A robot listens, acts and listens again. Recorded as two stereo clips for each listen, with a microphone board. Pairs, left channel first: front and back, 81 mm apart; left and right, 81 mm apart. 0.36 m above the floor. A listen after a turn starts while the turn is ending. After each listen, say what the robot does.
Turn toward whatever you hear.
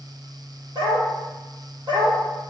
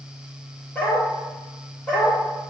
Turn 170° left.
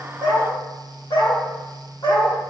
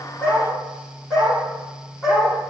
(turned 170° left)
Turn 10° left.
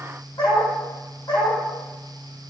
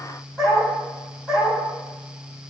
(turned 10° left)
Facing the dog barking.